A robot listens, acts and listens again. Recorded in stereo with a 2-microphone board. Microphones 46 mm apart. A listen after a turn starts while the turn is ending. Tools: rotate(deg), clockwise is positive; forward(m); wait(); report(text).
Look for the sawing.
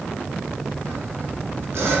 rotate(70)
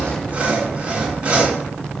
rotate(30)
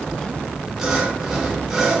report("Facing the sawing, 2 to 4 m away.")